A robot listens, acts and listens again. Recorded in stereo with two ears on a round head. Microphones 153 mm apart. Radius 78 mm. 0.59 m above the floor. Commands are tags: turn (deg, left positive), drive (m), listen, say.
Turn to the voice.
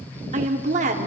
<turn deg="-45"/>
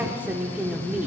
<turn deg="-10"/>
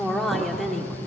<say>Found it: a woman speaking, straight ahead, 1 to 2 m away.</say>